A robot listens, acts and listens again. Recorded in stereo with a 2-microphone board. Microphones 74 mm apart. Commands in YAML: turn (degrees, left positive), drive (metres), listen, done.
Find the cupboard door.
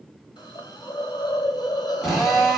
listen: true
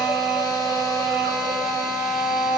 listen: true
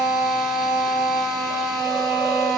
done: "I can't make out a cupboard door, only a hiss and a drill."